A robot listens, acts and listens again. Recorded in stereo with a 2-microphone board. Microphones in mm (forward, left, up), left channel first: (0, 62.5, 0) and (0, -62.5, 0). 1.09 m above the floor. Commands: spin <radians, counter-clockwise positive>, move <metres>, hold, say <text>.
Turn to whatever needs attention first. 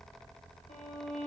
hold
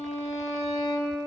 hold
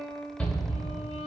spin 0.52
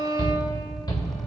spin 2.44
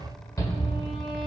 spin 0.52
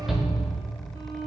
say Found it: a shout, straight ahead, 1 to 2 m away.